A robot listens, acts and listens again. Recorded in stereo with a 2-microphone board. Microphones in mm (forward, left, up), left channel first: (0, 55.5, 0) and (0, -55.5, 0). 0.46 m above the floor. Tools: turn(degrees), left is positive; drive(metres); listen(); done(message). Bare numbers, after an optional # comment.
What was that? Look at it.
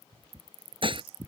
# The dishes clattering: about 50° right or 130° right.
turn(-50)
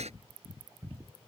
listen()
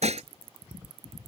# So it is at 80° right.
turn(-80)
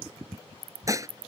# The dishes clattering is now 30° right.
turn(-30)
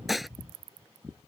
done("Facing the dishes clattering.")